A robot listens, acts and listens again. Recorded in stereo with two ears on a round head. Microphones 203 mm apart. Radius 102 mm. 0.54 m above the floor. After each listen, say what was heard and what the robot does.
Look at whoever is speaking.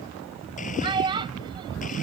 The child speaking: about 20° right or 160° right. Turn 20° right.
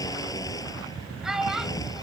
Facing the child speaking.